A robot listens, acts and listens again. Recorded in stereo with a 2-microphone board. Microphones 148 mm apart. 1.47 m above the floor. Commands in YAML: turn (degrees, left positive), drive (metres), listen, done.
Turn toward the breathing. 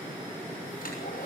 listen: true
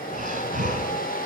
turn: -60
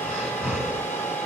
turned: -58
turn: -10
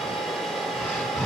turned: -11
done: "Found it: breathing, straight ahead."